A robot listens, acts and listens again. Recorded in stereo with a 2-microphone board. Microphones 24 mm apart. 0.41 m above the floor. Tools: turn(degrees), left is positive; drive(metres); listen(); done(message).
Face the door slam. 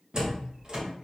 turn(degrees=-50)
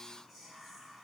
listen()
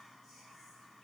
done("I heard a door slam, but can't make it out now. It was about straight ahead or 80° right.")